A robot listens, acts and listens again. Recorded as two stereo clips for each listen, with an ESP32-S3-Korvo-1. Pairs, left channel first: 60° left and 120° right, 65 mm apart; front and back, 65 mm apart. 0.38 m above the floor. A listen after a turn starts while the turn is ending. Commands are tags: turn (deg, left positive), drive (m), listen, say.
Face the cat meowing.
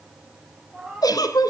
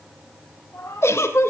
<turn deg="-45"/>
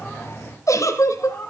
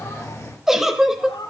<say>Found it: a cat meowing, straight ahead, over 4 m away.</say>